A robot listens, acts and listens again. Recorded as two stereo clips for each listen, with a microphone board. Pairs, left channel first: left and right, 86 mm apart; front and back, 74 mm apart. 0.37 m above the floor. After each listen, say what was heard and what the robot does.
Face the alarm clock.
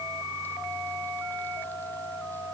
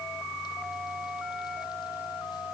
Keep listening.
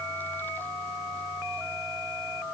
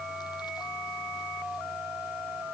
Keep listening.
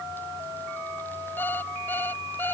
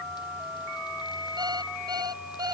The alarm clock: 155° left. Turn 155° left.
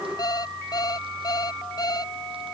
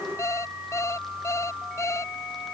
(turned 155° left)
The alarm clock is now 50° left. Turn 50° left.
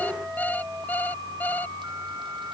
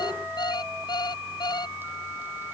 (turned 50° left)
The alarm clock is now 20° left. Turn 20° left.
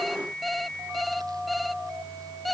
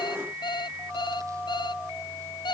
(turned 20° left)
Found it: an alarm clock, straight ahead.